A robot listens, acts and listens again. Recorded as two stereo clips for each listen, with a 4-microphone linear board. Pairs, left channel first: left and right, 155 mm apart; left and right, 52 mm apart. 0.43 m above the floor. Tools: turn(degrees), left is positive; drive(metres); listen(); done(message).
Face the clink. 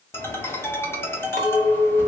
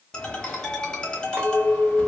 turn(degrees=-55)
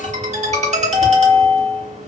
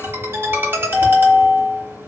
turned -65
listen()
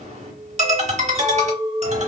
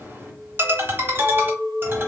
turn(degrees=-50)
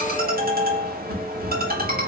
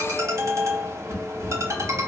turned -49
listen()
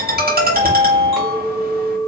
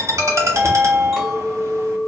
done("Found it: a clink, straight ahead.")